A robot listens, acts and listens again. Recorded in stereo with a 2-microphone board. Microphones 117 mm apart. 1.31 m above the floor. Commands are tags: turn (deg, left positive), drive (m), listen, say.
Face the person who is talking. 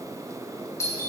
<listen/>
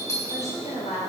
<turn deg="75"/>
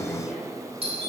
<listen/>
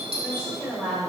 <turn deg="-10"/>
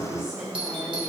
<listen/>
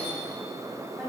<listen/>
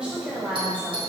<turn deg="-10"/>
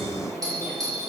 <listen/>
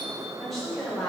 <say>Facing the woman speaking, over 4 m away.</say>